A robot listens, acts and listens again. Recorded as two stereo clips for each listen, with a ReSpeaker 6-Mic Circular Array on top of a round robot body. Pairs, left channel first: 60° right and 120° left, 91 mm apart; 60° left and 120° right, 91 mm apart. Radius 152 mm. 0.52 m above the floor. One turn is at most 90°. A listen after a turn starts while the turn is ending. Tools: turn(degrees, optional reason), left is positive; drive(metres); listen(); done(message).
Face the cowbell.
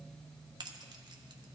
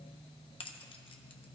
listen()
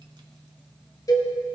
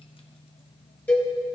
turn(degrees=-15, reason="The cowbell: 15° right.")
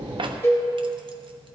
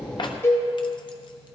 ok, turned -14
done("Found it: a cowbell, straight ahead, 2 to 4 m away.")